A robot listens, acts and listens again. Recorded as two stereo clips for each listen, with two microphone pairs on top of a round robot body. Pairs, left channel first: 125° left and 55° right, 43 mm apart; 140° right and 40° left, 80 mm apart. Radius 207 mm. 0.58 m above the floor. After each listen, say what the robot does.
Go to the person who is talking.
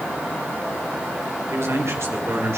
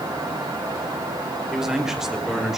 Turn 45° right.
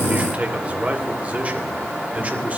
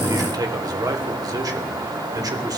Drive 1.0 m forward.
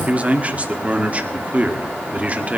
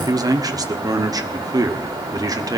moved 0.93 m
Drive 1.0 m forward.
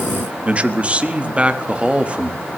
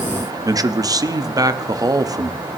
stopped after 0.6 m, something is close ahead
Turn 10° left.
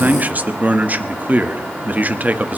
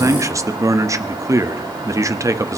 Arrived at the man speaking, straight ahead.